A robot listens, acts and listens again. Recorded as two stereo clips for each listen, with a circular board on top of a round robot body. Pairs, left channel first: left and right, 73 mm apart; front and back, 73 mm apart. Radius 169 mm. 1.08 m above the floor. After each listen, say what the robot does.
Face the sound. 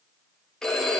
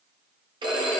Turn 170° left.
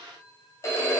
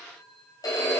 Turn 35° left.
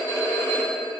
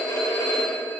Turn 30° left.
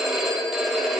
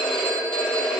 Facing the phone ringing.